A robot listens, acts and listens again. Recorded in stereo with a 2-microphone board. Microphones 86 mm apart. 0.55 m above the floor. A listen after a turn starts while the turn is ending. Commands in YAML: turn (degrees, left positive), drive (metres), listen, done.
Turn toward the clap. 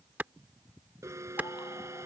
turn: -20
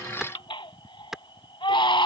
done: "Found it: a clap, straight ahead."